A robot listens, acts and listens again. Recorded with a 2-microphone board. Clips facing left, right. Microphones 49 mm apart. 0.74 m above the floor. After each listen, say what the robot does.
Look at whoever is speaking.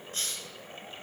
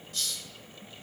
Keep listening.
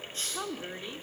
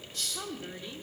Turn 20° left.
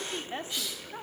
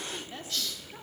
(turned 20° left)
Turn 25° left.
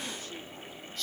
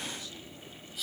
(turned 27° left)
Keep listening.
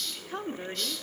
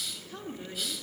Turn 35° left.
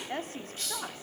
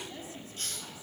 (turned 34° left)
Turn 130° left.
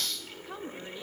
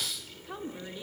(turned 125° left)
Found it: a woman speaking, straight ahead.